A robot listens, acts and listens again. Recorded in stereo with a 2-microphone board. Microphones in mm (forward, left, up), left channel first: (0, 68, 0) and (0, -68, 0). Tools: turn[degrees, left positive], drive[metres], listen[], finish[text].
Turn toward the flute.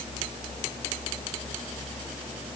Action: listen[]
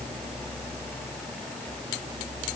Action: listen[]
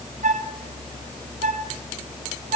Thought: The flute: about 65° right or 115° right.
Action: turn[-65]
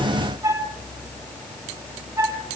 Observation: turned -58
Thought: So it is at 25° right.
Action: turn[-25]
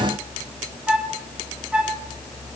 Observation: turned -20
Thought: The flute is now 10° right.
Action: turn[-10]
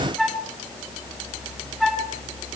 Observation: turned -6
Action: finish[Found it: a flute, straight ahead.]